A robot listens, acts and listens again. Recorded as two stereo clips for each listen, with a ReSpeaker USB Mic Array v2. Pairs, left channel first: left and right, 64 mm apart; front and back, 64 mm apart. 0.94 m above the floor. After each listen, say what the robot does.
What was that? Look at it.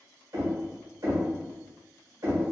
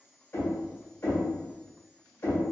Turn 55° right.
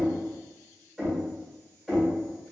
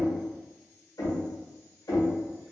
Found it: knocking, straight ahead, 1 to 2 m away.